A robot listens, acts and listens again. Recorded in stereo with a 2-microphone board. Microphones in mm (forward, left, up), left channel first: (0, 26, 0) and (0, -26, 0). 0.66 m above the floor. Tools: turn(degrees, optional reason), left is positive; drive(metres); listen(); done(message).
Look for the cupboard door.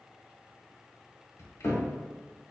turn(degrees=70, reason="The cupboard door: about 70° left or 110° left.")
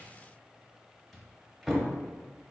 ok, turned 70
done("Found it: a cupboard door, straight ahead.")